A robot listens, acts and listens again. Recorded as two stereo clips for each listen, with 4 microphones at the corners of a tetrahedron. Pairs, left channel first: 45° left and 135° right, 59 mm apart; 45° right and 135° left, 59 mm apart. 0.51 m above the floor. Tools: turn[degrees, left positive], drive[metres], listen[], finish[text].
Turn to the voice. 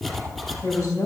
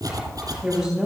Thought: The woman speaking: 55° left.
Action: turn[55]
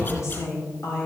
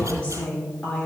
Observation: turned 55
Thought: The woman speaking is now 20° left.
Action: turn[20]
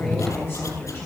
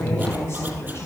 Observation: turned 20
Action: finish[Found it: a woman speaking, straight ahead.]